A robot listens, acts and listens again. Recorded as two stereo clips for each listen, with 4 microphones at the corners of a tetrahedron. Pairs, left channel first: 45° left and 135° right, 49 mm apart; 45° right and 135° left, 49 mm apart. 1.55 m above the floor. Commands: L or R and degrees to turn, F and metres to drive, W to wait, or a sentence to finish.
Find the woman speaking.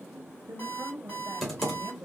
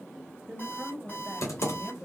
R140
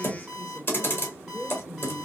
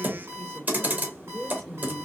L40
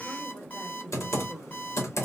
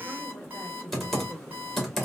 L25
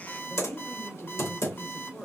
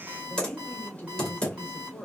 L10
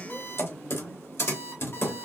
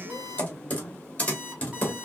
Found it: a woman speaking, straight ahead, 1 to 2 m away.